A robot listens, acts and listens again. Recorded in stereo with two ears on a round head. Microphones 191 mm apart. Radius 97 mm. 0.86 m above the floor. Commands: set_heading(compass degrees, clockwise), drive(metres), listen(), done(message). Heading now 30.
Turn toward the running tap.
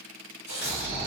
set_heading(330)
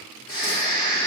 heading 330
listen()
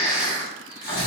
listen()
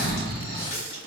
set_heading(265)
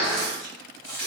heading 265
done("Facing the running tap.")